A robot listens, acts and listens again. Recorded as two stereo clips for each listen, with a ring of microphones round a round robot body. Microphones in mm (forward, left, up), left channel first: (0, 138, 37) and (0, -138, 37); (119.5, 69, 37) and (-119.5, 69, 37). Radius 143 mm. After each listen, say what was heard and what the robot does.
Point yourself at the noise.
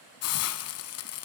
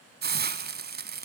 The hiss: 130° left. Turn 130° left.
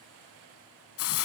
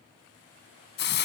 The hiss is now 45° left. Turn 45° left.
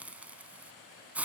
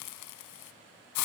Found it: a hiss, straight ahead, 1 to 2 m away.